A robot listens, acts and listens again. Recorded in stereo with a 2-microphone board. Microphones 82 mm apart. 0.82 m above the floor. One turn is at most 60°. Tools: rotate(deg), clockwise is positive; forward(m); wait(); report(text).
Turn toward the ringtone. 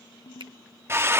rotate(-60)
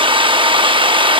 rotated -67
rotate(-25)
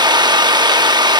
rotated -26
wait()
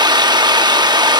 report("I heard a ringtone from this way, but can't make it out now.")